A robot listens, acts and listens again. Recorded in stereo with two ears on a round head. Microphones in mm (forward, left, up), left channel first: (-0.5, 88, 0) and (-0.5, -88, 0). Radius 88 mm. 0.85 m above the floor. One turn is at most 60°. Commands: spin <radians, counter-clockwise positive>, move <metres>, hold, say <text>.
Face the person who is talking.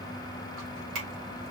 hold
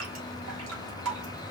hold
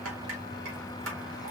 say I can't make out anyone speaking to turn to.